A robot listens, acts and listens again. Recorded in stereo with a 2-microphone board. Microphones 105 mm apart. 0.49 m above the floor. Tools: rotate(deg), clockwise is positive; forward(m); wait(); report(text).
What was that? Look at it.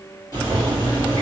rotate(-40)
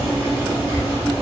rotate(-100)
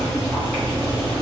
report("Facing the boiling, 1 to 2 m away.")